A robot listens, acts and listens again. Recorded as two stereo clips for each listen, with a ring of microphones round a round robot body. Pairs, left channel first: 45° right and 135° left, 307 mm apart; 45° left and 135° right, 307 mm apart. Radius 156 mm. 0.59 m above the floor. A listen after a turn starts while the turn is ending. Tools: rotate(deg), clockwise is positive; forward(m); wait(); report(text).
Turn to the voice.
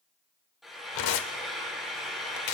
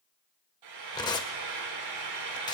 wait()
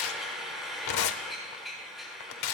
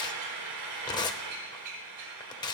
wait()
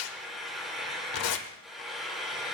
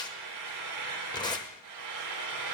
report("I can't make out anyone speaking to turn to.")